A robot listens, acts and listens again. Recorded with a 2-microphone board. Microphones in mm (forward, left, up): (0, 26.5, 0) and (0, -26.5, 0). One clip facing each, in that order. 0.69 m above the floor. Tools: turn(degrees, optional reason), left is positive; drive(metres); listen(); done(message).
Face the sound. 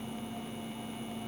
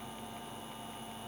listen()
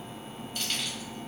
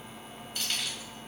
turn(degrees=30)
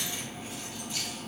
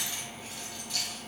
turn(degrees=150, reason="So it is at 150° left.")
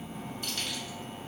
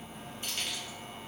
turn(degrees=-25, reason="The keys jangling is now 25° right.")
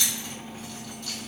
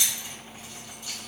turn(degrees=-20, reason="The keys jangling is now 20° right.")
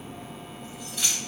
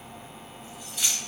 done("Found it: keys jangling, straight ahead, 1 to 2 m away.")